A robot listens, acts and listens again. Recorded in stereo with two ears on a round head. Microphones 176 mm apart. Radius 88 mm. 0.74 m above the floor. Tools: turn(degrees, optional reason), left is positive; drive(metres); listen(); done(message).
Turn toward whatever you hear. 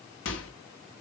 turn(degrees=65, reason="The microwave: about 65° left or 115° left.")
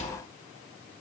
turn(degrees=40, reason="So it is at 40° left.")
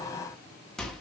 done("Found it: a microwave, straight ahead.")